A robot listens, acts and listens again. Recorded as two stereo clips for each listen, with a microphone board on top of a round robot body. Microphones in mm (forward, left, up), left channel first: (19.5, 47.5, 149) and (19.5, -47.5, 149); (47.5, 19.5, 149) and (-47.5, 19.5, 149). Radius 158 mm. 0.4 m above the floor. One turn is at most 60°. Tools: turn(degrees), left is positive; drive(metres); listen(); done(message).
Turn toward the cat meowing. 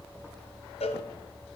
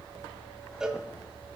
listen()
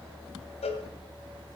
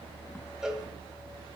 listen()
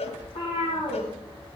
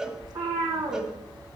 turn(degrees=60)
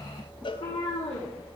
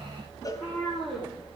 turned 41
turn(degrees=60)
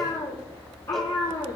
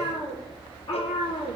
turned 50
turn(degrees=35)
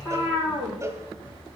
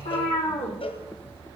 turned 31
done("Found it: a cat meowing, straight ahead, over 4 m away.")